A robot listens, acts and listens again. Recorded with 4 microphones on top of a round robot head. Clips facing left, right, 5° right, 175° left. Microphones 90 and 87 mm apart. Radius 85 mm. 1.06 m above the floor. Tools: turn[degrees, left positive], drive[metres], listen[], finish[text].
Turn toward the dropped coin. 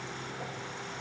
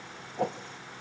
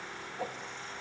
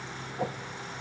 Action: listen[]
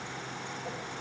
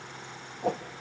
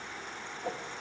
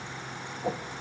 Action: listen[]
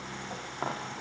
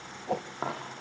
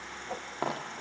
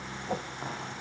Action: finish[Found it: a dropped coin, straight ahead.]